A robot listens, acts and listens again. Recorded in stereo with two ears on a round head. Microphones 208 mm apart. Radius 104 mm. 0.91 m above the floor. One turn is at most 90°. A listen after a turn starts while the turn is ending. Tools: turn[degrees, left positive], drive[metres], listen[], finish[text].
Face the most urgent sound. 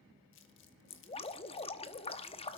Action: listen[]
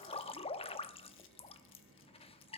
Action: listen[]
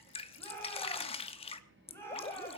Action: turn[30]
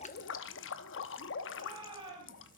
Thought: So it is at 20° right.
Action: turn[-20]
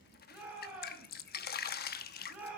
Action: finish[Found it: a shout, straight ahead.]